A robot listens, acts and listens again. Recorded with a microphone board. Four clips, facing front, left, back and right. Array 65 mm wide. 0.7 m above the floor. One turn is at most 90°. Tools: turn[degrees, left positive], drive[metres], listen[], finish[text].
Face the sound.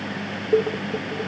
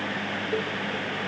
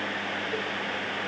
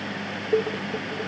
Thought: The dishes clattering: 20° right.
Action: turn[-20]
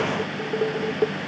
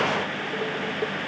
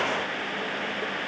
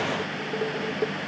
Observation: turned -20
Action: finish[Found it: dishes clattering, straight ahead.]